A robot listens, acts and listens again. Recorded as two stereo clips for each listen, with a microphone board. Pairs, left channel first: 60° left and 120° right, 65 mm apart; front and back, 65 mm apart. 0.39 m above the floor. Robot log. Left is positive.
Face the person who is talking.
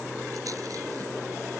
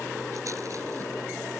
cmd idle
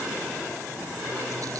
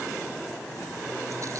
cmd idle
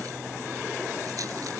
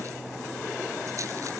end: I can't make out anyone speaking to turn to.